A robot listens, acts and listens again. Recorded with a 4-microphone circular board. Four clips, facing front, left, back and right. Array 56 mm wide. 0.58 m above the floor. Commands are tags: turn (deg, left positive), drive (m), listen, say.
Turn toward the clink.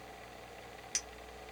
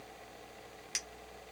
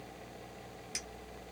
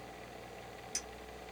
<turn deg="65"/>
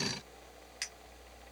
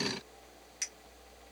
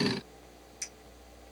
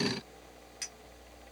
<say>Found it: a clink, straight ahead, under 1 m away.</say>